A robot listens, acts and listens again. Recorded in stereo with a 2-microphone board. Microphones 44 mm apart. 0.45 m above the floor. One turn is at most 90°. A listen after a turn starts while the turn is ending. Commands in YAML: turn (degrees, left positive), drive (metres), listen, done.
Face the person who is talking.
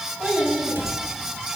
turn: -40
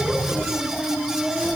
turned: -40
done: "Found it: a child speaking, straight ahead."